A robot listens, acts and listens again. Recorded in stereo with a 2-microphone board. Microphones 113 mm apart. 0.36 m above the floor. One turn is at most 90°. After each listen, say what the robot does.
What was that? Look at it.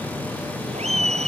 Turn 70° right.
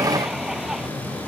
Keep listening.
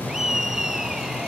Facing the laughter.